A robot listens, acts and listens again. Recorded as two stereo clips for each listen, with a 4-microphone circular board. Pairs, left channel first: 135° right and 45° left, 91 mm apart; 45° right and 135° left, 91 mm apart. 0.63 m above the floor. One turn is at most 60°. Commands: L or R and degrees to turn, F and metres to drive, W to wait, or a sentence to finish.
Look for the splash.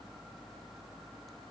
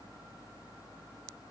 W
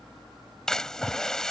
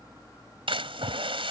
L60
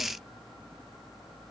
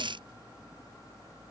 L60
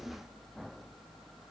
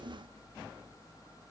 L20
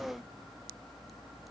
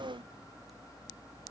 I heard a splash from this way, but can't make it out now.